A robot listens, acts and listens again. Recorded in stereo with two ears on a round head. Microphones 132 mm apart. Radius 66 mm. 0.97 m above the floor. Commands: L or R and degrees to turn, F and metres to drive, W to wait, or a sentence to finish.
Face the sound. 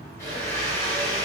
L20
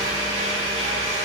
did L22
L140
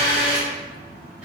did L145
Facing the blender, 2 to 4 m away.